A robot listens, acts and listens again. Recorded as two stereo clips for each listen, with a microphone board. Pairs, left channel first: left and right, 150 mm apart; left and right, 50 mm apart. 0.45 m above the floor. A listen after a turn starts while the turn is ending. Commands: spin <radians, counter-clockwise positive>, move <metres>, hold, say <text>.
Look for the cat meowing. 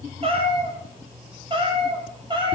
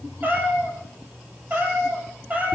spin -0.52
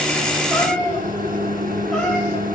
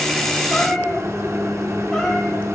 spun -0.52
say Found it: a cat meowing, straight ahead, over 4 m away.